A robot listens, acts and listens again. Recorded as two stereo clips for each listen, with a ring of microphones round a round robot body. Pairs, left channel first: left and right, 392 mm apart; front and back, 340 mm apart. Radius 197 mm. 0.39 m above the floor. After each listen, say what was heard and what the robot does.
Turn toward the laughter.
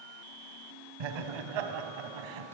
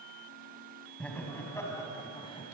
The laughter: 75° right. Turn 75° right.
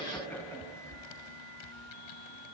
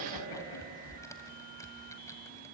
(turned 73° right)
Facing the laughter.